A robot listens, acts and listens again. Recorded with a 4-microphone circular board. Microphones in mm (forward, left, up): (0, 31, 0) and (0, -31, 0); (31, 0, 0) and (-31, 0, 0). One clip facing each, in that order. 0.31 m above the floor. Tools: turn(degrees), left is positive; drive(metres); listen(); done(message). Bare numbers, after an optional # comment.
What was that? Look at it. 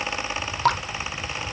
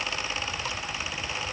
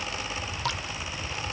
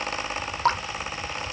# The dripping: 125° left.
turn(125)
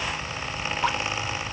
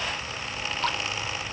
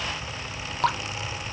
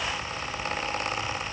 # The dripping is now 15° left.
turn(15)
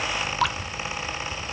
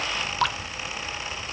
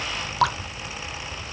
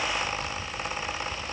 done("Found it: dripping, straight ahead.")